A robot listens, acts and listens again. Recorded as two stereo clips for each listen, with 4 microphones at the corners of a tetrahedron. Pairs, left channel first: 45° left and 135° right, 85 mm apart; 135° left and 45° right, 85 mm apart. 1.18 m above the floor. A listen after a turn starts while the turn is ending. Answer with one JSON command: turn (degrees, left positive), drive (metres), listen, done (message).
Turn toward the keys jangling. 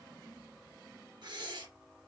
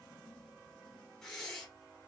{"listen": true}
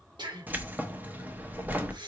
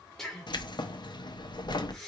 {"turn": 155}
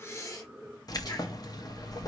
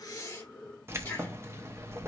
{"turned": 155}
{"turn": 10}
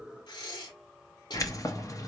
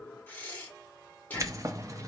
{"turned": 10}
{"done": "Found it: keys jangling, straight ahead."}